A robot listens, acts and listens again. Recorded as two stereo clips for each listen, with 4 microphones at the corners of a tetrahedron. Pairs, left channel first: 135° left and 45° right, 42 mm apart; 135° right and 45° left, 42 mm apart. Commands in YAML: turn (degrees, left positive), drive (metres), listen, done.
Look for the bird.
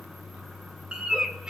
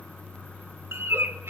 turn: 25
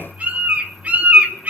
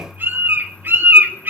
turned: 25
turn: 10
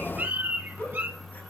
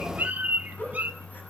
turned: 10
done: "Found it: a bird, straight ahead, 2 to 4 m away."